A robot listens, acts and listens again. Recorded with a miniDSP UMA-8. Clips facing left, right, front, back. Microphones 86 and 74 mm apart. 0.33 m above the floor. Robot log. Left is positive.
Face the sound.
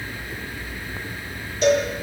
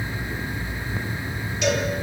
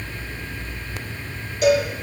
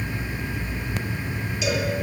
note: The cowbell: 40° left.
cmd yaw +40
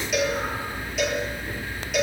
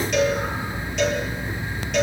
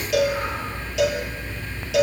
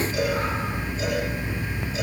end: Facing the cowbell, over 4 m away.